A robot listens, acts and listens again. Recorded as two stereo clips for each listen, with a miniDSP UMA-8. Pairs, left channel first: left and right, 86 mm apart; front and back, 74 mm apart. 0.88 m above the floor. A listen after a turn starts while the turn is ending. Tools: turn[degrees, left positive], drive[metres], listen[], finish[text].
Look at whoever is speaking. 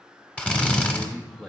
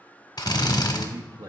Thought: The man speaking: 175° left.
Action: turn[175]
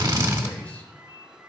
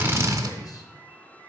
Action: listen[]
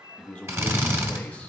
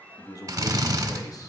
Thought: The man speaking is now 15° left.
Action: turn[15]
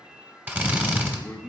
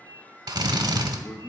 Action: finish[Found it: a man speaking, straight ahead, under 1 m away.]